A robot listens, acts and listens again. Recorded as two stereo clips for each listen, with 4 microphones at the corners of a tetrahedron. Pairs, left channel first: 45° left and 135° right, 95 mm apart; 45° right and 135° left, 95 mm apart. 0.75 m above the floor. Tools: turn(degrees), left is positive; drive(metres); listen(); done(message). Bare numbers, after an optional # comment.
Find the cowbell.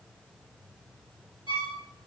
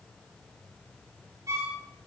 listen()
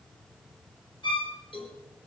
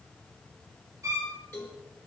# The cowbell: 20° left.
turn(20)
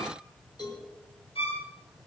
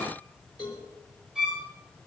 done("Found it: a cowbell, straight ahead, over 4 m away.")